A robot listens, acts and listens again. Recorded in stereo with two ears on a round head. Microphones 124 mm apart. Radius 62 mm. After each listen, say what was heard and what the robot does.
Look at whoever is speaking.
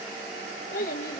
The child speaking: about 65° left or 115° left. Turn 65° left.
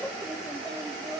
Found it: a child speaking, straight ahead.